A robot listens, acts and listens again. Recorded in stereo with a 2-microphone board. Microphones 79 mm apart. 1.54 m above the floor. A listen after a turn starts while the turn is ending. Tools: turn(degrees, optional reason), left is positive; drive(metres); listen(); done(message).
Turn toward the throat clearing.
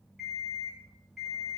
listen()
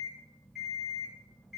listen()
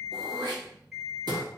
turn(degrees=-60, reason="The throat clearing: about 60° right or 120° right.")
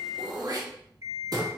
turn(degrees=-55, reason="So it is at 55° right.")
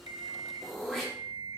done("Facing the throat clearing.")